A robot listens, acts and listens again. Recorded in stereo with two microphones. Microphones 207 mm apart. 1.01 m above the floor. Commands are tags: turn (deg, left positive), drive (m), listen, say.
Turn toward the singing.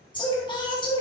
<turn deg="20"/>
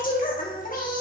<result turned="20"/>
<turn deg="140"/>
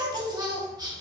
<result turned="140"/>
<turn deg="-20"/>
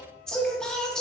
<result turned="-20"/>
<say>Facing the singing, 1 to 2 m away.</say>